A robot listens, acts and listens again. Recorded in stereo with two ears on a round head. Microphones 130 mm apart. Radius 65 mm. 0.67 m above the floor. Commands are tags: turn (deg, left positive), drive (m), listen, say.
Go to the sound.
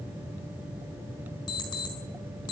<turn deg="35"/>
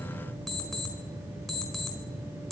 <drive m="1.0"/>
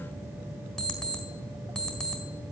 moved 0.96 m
<drive m="1.0"/>
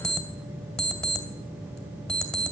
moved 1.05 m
<drive m="1.0"/>
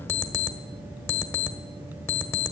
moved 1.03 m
<turn deg="15"/>
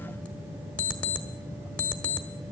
<turn deg="10"/>
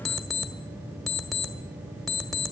<drive m="1.0"/>
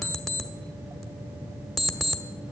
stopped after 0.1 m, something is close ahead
<say>I am next to the alarm clock.</say>